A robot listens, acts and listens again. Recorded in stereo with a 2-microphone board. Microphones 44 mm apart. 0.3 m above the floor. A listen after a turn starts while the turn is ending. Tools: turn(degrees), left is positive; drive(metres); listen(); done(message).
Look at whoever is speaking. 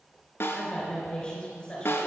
turn(degrees=20)
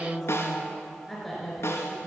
done("Facing the woman speaking.")